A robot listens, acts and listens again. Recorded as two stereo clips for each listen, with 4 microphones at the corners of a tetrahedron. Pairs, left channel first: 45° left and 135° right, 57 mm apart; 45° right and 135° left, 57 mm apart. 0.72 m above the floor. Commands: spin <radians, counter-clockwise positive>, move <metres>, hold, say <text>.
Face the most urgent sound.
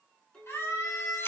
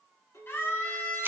say Facing the scream, over 4 m away.